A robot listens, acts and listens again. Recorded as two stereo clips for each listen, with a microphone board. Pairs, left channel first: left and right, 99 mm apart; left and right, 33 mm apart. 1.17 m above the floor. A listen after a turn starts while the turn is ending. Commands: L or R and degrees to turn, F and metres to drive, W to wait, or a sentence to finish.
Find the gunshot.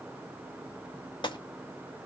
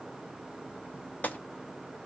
L50
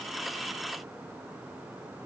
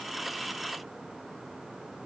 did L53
W
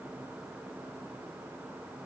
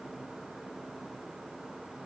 I heard a gunshot, but can't make it out now. It was about 5° right or 80° left.